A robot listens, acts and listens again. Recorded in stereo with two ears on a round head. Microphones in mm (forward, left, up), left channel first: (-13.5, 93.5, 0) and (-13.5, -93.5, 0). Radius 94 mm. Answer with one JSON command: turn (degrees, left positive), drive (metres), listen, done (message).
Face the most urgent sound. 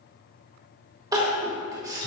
{"turn": -20}
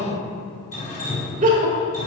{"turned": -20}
{"turn": -140}
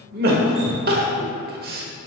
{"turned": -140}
{"turn": -45}
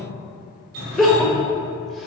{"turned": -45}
{"done": "Found it: crying, straight ahead, 1 to 2 m away."}